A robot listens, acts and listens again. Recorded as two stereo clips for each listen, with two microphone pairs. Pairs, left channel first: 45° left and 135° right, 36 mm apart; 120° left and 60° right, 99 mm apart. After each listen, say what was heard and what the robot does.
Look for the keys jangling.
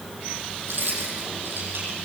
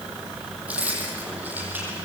The keys jangling: 135° right. Turn 135° right.
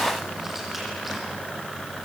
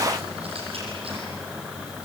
Keep listening.
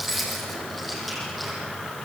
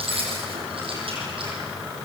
The keys jangling is now 45° right. Turn 45° right.
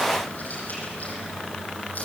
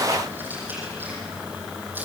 The keys jangling is now 10° left. Turn 10° left.
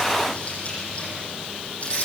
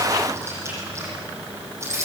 Facing the keys jangling, over 4 m away.